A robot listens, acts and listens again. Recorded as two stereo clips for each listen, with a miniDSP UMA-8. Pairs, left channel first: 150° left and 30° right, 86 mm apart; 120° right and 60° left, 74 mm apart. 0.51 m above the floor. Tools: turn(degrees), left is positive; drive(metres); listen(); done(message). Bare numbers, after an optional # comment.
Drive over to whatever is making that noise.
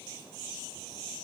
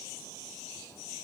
listen()
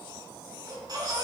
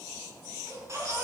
# The baby crying: 10° left.
turn(10)
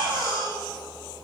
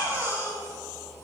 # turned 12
drive(1.0)
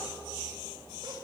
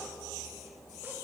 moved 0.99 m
drive(1.0)
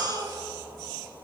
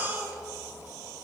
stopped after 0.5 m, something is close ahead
done("I am next to the baby crying.")